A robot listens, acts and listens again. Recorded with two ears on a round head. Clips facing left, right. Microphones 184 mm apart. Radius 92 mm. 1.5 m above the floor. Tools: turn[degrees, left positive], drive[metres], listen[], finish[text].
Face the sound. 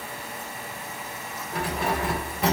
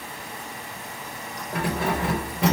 Thought: The keys jangling: about 55° right or 125° right.
Action: turn[-55]
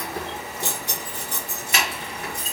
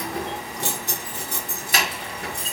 Thought: So it is at 25° right.
Action: turn[-25]
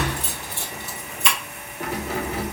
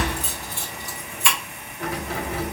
Thought: The keys jangling is now 25° left.
Action: turn[25]
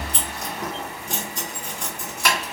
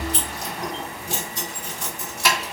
Action: finish[Facing the keys jangling.]